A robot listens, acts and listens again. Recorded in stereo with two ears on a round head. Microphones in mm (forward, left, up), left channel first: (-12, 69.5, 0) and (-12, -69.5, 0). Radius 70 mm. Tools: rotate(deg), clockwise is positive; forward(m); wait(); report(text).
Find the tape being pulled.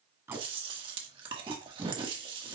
rotate(15)
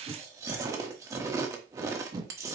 rotate(150)
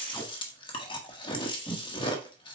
rotate(-15)
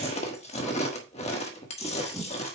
report("Facing the tape being pulled.")